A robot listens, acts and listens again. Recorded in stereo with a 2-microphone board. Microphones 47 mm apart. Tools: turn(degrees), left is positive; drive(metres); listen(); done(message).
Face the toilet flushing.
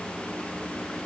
listen()
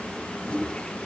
turn(degrees=25)
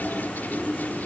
turn(degrees=125)
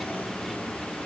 listen()
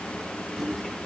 done("Found it: a toilet flushing, straight ahead.")